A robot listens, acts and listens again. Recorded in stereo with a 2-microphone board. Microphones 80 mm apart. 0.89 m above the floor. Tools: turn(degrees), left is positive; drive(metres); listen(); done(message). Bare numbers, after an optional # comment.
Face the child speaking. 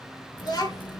# The child speaking: about 50° left or 130° left.
turn(50)
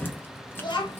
# So it is at 75° left.
turn(75)
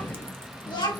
# The child speaking is now 70° left.
turn(70)
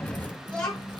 # The child speaking is now 15° left.
turn(15)
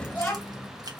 done("Facing the child speaking, 1 to 2 m away.")